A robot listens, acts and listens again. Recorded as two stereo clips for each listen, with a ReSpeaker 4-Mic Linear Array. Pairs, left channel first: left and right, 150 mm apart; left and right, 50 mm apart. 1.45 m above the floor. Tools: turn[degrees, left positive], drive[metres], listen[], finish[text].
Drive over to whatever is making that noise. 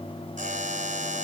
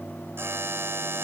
Thought: The buzzer: about 55° right or 125° right.
Action: turn[-55]
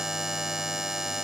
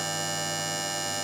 Action: drive[1.0]
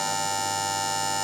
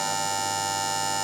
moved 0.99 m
Action: drive[1.0]
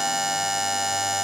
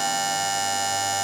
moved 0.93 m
Action: drive[1.0]
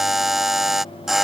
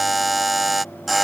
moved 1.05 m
Action: drive[1.0]
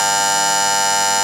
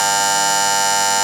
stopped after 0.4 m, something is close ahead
Action: finish[Arrived at the buzzer, straight ahead.]